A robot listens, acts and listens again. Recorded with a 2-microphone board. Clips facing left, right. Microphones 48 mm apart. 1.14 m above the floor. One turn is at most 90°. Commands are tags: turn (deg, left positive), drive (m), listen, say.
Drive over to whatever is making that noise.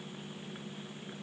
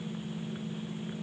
<listen/>
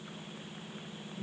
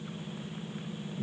<listen/>
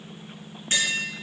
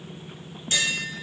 <turn deg="35"/>
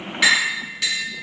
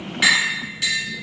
<drive m="1.0"/>
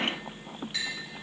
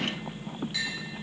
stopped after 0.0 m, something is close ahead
<say>Blocked. The tapping is further on, straight ahead.</say>